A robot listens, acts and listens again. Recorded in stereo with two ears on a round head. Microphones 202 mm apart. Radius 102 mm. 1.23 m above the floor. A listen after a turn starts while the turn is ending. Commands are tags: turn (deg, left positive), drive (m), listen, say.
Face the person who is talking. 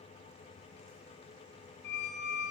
<listen/>
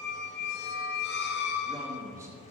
<turn deg="-30"/>
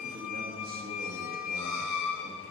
<listen/>
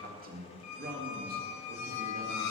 <turn deg="-135"/>
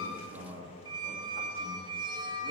<turn deg="-15"/>
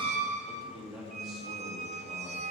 <say>Found it: a man speaking, straight ahead, 2 to 4 m away.</say>